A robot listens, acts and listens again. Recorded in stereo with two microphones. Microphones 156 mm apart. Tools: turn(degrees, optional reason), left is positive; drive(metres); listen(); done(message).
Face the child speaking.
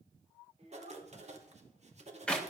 turn(degrees=-45, reason="The child speaking: about 45° right or 135° right.")
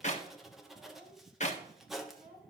turn(degrees=-80, reason="So it is at 80° right.")
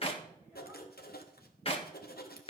listen()
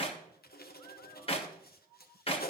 listen()
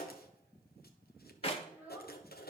turn(degrees=-10, reason="The child speaking is now 10° right.")
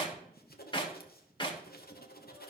listen()
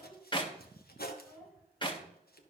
done("Found it: a child speaking, straight ahead, over 4 m away.")